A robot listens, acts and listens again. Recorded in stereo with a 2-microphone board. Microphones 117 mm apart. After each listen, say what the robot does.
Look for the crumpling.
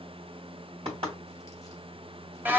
Keep listening.
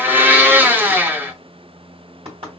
Keep listening.
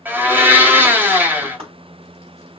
I can't make out crumpling to turn to.